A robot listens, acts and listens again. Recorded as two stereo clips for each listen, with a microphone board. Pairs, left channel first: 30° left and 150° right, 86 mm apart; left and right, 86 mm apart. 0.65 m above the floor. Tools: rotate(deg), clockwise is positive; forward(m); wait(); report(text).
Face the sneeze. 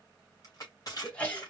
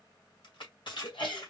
rotate(-105)
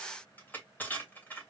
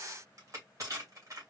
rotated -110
report("Facing where the sneeze came from. I can't hear it now.")